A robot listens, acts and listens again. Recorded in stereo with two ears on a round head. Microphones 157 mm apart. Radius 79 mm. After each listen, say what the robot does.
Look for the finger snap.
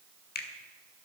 Turn 60° left.
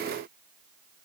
Keep listening.
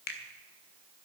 Turn 55° left.
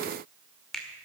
Facing the finger snap, 1 to 2 m away.